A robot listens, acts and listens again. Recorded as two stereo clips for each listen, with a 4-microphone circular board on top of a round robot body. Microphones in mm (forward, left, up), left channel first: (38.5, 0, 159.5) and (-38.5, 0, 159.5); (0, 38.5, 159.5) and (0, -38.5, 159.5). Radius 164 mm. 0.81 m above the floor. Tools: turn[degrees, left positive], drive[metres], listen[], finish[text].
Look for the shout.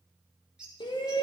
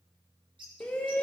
Thought: The shout: 15° left.
Action: turn[15]
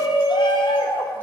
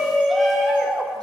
Action: finish[Found it: a shout, straight ahead, 1 to 2 m away.]